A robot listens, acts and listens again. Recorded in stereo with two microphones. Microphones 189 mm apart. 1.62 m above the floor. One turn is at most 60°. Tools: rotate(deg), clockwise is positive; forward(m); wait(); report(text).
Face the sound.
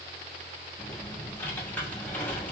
rotate(-30)
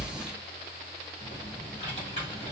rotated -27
rotate(-60)
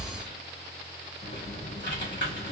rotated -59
rotate(-60)
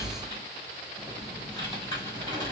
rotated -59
rotate(-25)
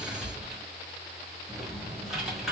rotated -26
report("Found it: typing on a keyboard, straight ahead.")